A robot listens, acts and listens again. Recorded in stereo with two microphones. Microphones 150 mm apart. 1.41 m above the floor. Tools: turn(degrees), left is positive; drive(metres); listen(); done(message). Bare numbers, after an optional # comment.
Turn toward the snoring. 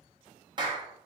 listen()
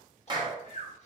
# The snoring: about 45° left or 135° left.
turn(45)
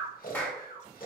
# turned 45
# So it is at 85° left.
turn(85)
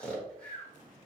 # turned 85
# The snoring is now 10° left.
turn(10)
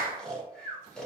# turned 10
done("Found it: snoring, straight ahead, 1 to 2 m away.")